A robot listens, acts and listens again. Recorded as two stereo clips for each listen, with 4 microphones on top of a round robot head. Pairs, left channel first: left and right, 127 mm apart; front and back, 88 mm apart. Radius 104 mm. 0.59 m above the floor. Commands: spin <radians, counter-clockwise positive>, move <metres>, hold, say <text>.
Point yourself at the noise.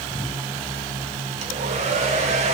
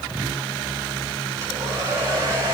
spin -2.09
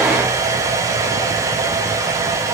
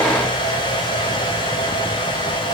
spin -0.44
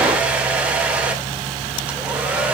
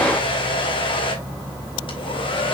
spin -0.17
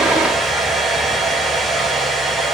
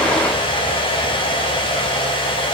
say Facing the hair dryer.